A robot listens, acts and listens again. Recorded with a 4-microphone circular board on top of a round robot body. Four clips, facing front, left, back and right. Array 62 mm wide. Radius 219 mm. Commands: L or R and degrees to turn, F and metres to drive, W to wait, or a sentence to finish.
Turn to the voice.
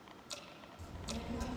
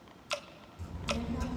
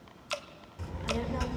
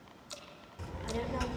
R135
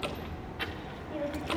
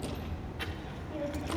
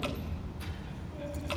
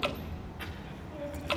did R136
L15
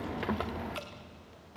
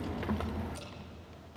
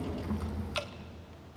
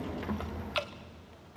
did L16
L15
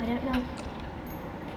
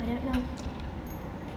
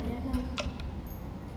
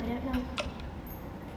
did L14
L15
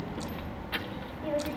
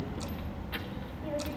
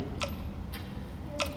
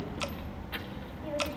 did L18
Found it: a child speaking, straight ahead.